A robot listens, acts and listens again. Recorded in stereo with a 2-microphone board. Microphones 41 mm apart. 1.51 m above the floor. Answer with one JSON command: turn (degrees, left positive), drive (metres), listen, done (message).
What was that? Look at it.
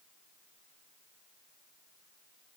{"listen": true}
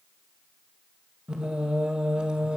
{"turn": -25}
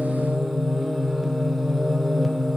{"done": "Found it: singing, straight ahead, 2 to 4 m away."}